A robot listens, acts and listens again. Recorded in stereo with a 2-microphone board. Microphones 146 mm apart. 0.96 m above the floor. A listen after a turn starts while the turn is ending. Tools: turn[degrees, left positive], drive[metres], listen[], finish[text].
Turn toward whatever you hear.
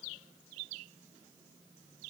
Action: listen[]
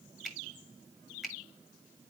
Action: turn[-30]
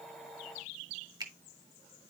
Thought: So it is at 150° right.
Action: turn[-150]
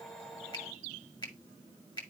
Thought: The finger snap is now 30° left.
Action: turn[30]
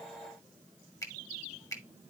Thought: The finger snap is now 25° left.
Action: turn[25]
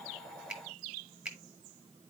Action: finish[Facing the finger snap, 1 to 2 m away.]